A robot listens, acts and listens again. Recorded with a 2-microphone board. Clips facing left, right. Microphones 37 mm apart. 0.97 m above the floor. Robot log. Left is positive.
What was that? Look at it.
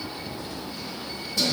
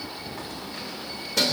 cmd yaw -90
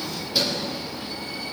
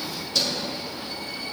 note: So it is at 20° left.
cmd yaw +20
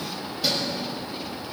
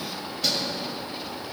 note: The keys jangling is now 10° left.
cmd yaw +10
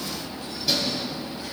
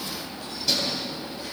end: Facing the keys jangling.